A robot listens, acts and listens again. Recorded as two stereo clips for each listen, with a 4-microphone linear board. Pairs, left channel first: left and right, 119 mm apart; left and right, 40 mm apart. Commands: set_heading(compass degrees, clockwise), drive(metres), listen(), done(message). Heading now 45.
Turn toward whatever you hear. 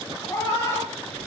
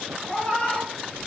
set_heading(25)
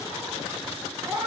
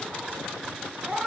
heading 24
set_heading(39)
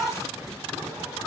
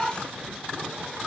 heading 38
done("Found it: a cat meowing, straight ahead, 1 to 2 m away.")